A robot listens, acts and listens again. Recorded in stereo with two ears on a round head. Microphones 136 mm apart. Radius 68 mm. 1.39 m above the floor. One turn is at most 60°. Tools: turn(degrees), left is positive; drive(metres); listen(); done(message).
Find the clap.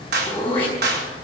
turn(degrees=-60)
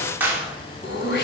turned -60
turn(degrees=-15)
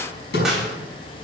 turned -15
done("Found it: a clap, straight ahead.")